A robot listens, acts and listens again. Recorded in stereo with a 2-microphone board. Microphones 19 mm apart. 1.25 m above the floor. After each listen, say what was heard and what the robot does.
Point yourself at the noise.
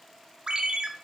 The ringtone: about 50° right or 130° right. Turn 50° right.
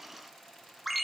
Found it: a ringtone, straight ahead, under 1 m away.